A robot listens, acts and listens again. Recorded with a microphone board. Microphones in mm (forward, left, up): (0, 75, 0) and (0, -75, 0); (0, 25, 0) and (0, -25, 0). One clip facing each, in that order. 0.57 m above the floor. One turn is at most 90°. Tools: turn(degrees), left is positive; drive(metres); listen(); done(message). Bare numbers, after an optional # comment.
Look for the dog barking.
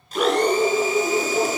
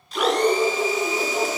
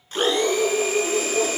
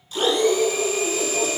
# The dog barking: about 30° left or 150° left.
turn(30)
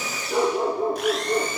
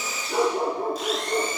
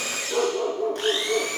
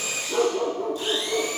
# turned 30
# So it is at 10° left.
turn(10)
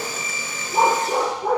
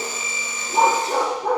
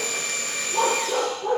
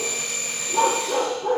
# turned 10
done("Facing the dog barking, 2 to 4 m away.")